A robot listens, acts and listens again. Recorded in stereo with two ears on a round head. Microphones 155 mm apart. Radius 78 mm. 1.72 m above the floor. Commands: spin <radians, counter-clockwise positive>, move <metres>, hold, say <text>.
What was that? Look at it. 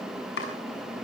spin 1.22
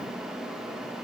hold
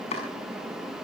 spin 0.61
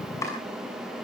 spin 0.26
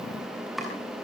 say Found it: chopping, straight ahead.